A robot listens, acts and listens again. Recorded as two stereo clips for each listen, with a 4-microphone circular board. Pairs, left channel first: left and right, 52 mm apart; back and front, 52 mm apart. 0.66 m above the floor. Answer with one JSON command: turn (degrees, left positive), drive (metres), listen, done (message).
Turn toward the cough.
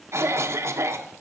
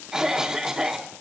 {"turn": -75}
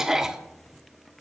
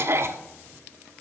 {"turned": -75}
{"turn": -10}
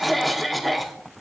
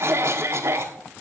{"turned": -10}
{"done": "Facing the cough."}